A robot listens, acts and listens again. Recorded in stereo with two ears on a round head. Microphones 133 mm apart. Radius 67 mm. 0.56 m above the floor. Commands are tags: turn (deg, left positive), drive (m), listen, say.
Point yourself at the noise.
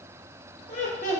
<turn deg="50"/>
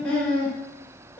<turn deg="10"/>
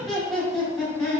<say>Found it: laughter, straight ahead, 1 to 2 m away.</say>